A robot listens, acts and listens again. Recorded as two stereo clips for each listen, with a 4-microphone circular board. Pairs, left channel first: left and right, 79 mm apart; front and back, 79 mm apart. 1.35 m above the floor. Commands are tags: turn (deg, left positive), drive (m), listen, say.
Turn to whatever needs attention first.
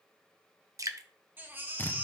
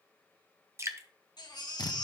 <turn deg="-25"/>
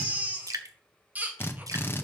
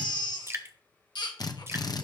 <turn deg="-20"/>
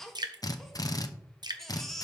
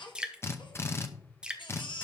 <say>Found it: a baby crying, straight ahead, 1 to 2 m away.</say>